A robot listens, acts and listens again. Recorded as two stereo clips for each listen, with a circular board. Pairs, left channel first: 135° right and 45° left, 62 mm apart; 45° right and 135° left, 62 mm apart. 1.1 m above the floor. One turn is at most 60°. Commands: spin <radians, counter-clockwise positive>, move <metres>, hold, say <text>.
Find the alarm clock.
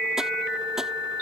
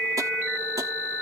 hold
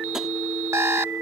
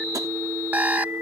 spin 1.05
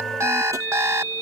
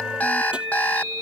spin 0.26
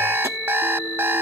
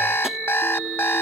say Found it: an alarm clock, straight ahead.